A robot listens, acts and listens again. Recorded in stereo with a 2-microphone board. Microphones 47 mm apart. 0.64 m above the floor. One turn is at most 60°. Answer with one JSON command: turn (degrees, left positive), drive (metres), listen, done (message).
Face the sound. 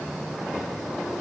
{"listen": true}
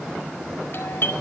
{"turn": 55}
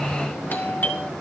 {"turn": 55}
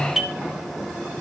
{"turn": -10}
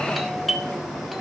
{"done": "Found it: a doorbell, straight ahead."}